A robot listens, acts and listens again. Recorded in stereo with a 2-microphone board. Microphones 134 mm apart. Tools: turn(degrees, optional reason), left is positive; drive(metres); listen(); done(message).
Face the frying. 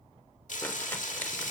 turn(degrees=70, reason="The frying: about 70° left or 110° left.")
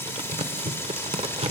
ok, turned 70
turn(degrees=20, reason="So it is at 20° left.")
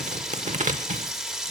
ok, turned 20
done("Facing the frying.")